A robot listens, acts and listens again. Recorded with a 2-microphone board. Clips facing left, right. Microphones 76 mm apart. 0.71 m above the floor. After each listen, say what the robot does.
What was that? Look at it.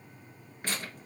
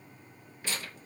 Turn 45° left.
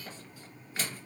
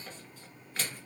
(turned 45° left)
Facing the tearing paper.